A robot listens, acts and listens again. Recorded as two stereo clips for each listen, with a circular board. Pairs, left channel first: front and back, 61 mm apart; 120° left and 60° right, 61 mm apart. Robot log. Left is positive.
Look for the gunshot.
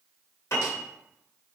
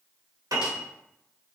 cmd idle
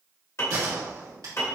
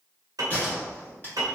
note: The gunshot: straight behind.
cmd yaw +180
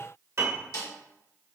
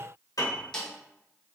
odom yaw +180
end: I heard a gunshot from this way, but can't make it out now.